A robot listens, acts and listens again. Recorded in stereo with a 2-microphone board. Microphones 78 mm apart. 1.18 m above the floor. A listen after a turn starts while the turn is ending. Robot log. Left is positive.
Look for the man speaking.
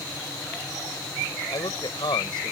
cmd yaw +90
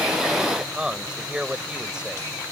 note: So it is at 10° right.
cmd yaw -10
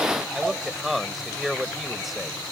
end: Found it: a man speaking, straight ahead.